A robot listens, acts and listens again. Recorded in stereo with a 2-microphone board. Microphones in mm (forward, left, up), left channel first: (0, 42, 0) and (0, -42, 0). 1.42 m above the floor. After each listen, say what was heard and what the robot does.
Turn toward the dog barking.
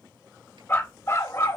The dog barking: about 40° left or 140° left. Turn 40° left.
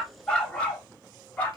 So it is at 20° left. Turn 20° left.
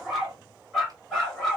Facing the dog barking, 2 to 4 m away.